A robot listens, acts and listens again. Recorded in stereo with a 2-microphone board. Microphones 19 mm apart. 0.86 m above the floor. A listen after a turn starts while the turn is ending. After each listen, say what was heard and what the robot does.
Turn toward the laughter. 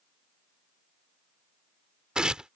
Keep listening.
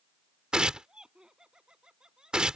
The laughter: about 45° right or 135° right. Turn 45° right.
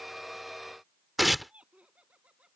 So it is at 95° right. Turn 95° right.
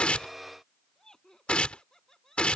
The laughter is now 30° left. Turn 30° left.
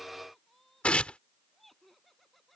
The laughter is now 10° left. Turn 10° left.
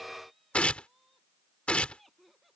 Facing the laughter.